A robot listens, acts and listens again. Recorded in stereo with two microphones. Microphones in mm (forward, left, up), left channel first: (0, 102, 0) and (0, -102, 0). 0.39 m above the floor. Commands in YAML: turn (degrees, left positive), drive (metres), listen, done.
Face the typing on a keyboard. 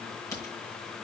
turn: 15
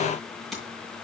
done: "Found it: typing on a keyboard, straight ahead."